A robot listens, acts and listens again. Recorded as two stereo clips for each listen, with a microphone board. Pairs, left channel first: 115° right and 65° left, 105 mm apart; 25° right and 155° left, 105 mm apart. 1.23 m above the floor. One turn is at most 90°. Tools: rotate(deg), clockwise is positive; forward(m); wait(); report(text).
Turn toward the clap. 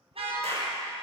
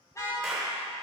rotate(-70)
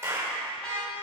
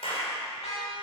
report("Found it: a clap, straight ahead.")